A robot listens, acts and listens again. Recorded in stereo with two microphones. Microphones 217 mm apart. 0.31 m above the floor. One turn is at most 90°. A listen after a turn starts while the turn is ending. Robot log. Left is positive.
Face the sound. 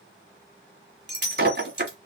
note: The breaking glass: about 50° right or 130° right.
cmd yaw -50
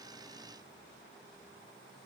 cmd idle
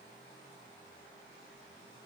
end: I heard breaking glass, but can't make it out now. It was about straight ahead or 80° right.